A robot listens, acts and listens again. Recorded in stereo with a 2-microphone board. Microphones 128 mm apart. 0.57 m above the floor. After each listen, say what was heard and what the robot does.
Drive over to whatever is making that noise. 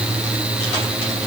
Keep listening.
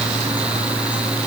Keep listening.
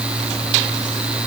I can't make out anything.